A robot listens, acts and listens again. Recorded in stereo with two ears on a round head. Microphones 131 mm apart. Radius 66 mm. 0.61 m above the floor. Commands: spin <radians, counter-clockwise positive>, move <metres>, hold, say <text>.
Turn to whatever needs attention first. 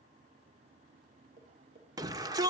spin -0.44
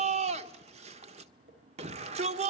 spin -2.18
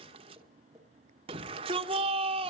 spin -0.79
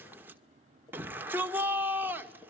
spin -0.26
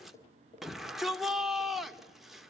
say Found it: a shout, straight ahead.